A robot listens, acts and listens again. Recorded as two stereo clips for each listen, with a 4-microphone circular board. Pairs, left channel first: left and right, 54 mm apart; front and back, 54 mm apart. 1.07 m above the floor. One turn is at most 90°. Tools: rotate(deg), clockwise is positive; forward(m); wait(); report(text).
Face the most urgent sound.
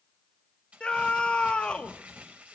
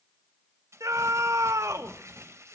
rotate(-90)
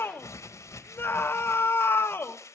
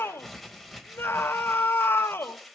rotate(-45)
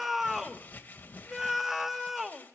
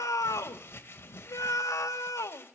report("Found it: a scream, straight ahead, 1 to 2 m away.")